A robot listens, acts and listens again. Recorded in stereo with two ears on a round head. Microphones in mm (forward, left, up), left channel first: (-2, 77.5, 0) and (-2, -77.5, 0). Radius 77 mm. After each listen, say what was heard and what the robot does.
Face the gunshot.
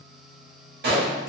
The gunshot: about 60° right or 120° right. Turn 60° right.
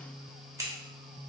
Keep listening.
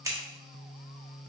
I heard a gunshot, but can't make it out now. It was about straight ahead or 60° right.